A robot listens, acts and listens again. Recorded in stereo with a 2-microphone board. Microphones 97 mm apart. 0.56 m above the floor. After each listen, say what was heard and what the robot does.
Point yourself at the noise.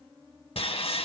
Turn 90° left.
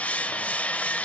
So it is at 15° left. Turn 15° left.
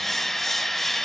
Found it: sawing, straight ahead, under 1 m away.